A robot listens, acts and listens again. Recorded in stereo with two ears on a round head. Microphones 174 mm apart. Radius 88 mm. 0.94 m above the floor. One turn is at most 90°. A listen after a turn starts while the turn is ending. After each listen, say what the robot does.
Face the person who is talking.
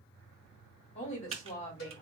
Turn 35° left.
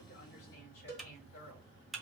Turn 90° left.
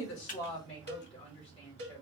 Turn 30° left.
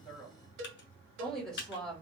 Facing the woman speaking, 1 to 2 m away.